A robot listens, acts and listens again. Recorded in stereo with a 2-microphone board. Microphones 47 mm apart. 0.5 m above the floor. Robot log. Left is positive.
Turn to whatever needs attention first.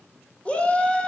note: The shout: about 25° left or 155° left.
cmd yaw +25
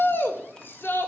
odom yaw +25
note: So it is at 125° left.
cmd yaw +125
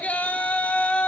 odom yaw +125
note: The shout is now 35° left.
cmd yaw +35
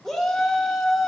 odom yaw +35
note: The shout is now 10° left.
cmd yaw +10
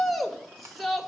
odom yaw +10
end: Facing the shout, 1 to 2 m away.